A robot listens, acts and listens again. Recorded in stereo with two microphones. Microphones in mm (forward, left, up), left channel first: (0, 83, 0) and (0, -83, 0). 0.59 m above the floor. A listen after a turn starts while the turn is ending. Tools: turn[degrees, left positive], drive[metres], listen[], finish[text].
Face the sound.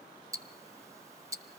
Thought: The ticking: about 20° right or 160° right.
Action: turn[-20]
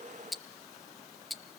Action: finish[Found it: ticking, straight ahead.]